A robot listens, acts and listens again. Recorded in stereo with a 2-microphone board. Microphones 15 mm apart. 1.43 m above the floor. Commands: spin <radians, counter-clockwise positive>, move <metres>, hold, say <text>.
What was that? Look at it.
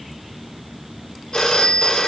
spin 1.05
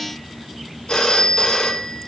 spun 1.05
spin 1.05
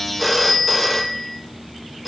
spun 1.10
say Found it: a phone ringing, straight ahead, 1 to 2 m away.